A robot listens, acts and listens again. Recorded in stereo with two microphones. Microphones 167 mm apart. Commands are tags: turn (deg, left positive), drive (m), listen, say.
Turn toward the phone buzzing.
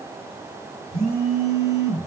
<turn deg="30"/>
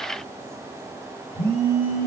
<turn deg="145"/>
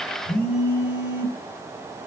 <turn deg="45"/>
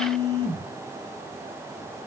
<say>Found it: a phone buzzing, straight ahead.</say>